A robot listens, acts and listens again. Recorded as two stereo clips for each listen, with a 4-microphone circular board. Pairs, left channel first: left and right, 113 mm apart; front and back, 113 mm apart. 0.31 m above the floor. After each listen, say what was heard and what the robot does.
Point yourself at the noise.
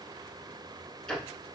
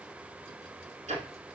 The ticking: 175° left. Turn 175° left.
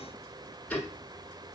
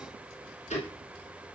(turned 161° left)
The ticking is now 15° left. Turn 15° left.
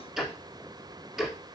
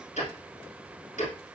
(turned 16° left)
Facing the ticking, 1 to 2 m away.